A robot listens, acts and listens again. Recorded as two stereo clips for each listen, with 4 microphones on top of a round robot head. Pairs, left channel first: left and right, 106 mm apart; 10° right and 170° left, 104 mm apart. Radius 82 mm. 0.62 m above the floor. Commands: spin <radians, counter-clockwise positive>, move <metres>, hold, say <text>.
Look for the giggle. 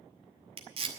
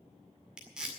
hold
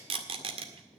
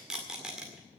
hold
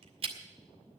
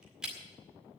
say I can't make out a giggle, only tape being pulled.